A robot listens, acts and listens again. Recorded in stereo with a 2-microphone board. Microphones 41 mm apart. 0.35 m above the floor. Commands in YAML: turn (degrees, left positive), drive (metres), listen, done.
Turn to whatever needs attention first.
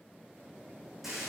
listen: true
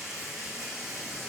listen: true
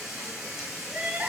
turn: -45
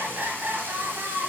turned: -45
turn: -80
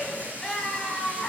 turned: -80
done: "Facing the crying, 1 to 2 m away."